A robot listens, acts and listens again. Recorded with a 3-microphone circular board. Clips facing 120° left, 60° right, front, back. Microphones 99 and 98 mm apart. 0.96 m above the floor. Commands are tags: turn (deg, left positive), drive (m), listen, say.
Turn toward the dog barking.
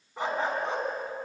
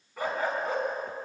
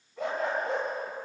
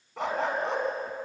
<turn deg="-170"/>
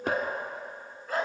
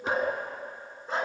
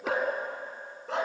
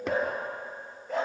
<say>Found it: a dog barking, straight ahead.</say>